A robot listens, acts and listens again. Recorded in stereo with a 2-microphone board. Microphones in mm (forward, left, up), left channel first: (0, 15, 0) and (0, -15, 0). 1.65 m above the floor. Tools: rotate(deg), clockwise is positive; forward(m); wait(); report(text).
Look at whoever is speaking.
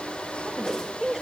rotate(30)
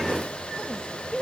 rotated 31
rotate(-20)
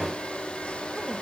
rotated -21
wait()
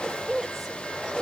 report("Found it: a woman speaking, straight ahead, 2 to 4 m away.")